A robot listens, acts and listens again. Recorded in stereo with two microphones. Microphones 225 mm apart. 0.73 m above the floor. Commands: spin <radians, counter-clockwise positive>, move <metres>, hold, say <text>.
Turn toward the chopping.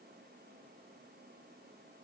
hold
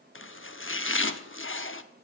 spin 1.05
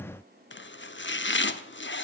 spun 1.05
spin 1.05
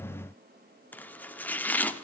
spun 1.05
spin 0.17
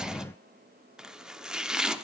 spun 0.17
say Found it: chopping, straight ahead, under 1 m away.